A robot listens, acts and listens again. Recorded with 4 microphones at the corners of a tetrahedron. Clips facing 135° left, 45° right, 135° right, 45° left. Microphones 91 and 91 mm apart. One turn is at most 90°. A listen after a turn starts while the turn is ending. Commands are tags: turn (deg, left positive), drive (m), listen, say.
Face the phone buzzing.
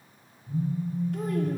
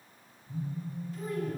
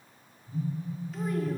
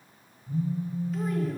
<turn deg="70"/>
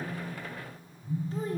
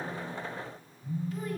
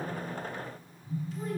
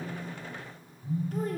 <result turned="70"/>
<turn deg="10"/>
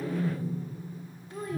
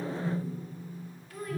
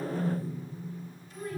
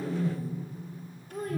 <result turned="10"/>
<say>Facing the phone buzzing.</say>